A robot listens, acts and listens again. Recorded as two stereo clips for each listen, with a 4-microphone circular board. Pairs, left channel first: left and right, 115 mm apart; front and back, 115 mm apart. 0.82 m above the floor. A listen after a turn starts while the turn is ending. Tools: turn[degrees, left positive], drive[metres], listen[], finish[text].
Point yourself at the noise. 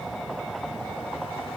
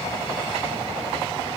Action: listen[]
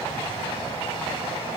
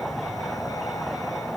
Action: listen[]
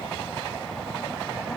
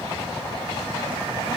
Action: finish[I can't make out anything to turn to.]